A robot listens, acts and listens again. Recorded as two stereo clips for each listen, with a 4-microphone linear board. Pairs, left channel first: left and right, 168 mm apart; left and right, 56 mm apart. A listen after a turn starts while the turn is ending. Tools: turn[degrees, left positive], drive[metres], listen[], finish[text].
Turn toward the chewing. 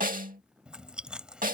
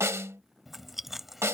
Action: turn[-30]
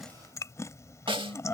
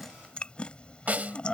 Thought: So it is at 20° left.
Action: turn[20]
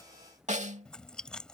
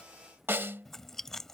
Action: finish[Found it: chewing, straight ahead.]